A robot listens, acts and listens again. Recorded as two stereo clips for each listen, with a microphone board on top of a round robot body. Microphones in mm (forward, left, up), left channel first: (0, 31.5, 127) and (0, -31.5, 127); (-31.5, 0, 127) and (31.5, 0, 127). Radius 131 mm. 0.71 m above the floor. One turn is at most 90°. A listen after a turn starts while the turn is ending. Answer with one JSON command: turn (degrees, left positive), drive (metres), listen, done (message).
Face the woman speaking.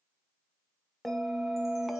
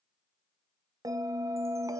{"listen": true}
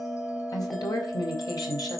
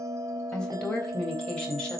{"turn": 90}
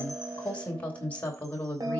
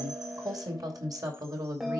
{"turn": 25}
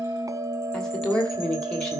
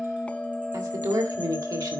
{"turn": 10}
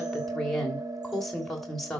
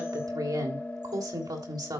{"done": "Found it: a woman speaking, straight ahead, 2 to 4 m away."}